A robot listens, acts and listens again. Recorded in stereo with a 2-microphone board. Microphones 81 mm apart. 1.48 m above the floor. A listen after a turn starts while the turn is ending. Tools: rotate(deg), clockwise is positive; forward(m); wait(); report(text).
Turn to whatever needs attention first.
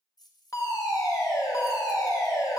rotate(-45)
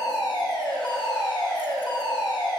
rotate(-85)
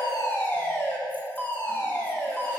rotate(-30)
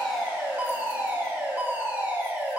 rotate(25)
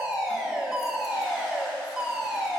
report("Facing the fire alarm, 1 to 2 m away.")